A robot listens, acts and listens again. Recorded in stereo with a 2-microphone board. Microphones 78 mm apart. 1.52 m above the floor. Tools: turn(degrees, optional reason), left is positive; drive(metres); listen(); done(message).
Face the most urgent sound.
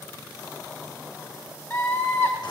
turn(degrees=25, reason="The scream: about 25° left or 155° left.")
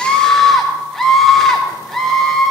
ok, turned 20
done("Found it: a scream, straight ahead, 2 to 4 m away.")